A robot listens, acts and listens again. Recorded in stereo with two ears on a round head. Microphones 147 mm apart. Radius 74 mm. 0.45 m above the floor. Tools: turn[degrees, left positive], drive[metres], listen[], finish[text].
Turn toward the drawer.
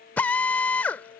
Action: listen[]
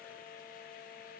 Action: listen[]
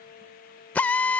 Action: finish[I can't make out a drawer to turn to.]